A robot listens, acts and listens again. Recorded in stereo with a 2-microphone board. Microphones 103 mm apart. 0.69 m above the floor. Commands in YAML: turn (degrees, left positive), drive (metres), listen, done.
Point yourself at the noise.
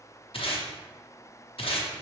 turn: 70
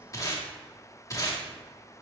turn: 35
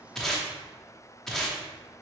done: "Facing the tape being pulled."